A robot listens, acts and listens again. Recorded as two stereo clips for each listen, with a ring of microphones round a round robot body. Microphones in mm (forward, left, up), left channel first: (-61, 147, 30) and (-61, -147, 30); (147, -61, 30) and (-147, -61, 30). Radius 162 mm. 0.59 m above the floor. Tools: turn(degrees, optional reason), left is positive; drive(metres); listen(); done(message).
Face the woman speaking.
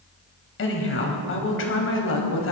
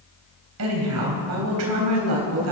turn(degrees=135, reason="The woman speaking: 135° left.")
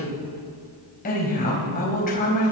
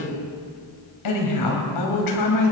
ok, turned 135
turn(degrees=25, reason="The woman speaking is now 25° left.")
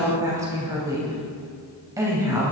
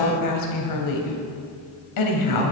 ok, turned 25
turn(degrees=-10, reason="The woman speaking is now 10° right.")
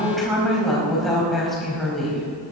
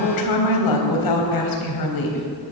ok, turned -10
done("Found it: a woman speaking, straight ahead, 2 to 4 m away.")